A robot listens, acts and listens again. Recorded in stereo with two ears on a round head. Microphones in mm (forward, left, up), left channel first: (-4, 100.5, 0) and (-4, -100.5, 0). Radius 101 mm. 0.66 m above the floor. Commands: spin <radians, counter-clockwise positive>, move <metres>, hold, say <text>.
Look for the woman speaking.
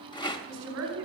spin -1.22
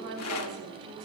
spin -0.70
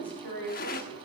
say Found it: a woman speaking, straight ahead, 2 to 4 m away.